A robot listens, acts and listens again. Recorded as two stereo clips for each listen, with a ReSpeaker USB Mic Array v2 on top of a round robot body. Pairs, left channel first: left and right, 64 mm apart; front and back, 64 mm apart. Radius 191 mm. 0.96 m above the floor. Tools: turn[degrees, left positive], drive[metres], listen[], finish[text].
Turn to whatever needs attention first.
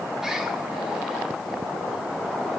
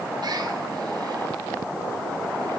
Action: listen[]
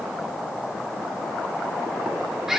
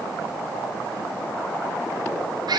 Action: listen[]
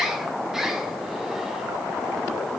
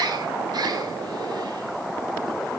Action: finish[I can't make out anything urgent, only a bird.]